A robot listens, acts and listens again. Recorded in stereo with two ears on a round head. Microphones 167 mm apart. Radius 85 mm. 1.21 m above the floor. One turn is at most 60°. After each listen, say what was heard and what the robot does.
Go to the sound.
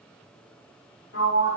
The sliding door: about 60° left or 120° left. Turn 60° left.
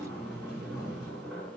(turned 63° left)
Drive 1.0 m forward.
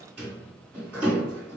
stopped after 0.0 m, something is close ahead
Something is in my way. I am facing the sliding door but have not reached it.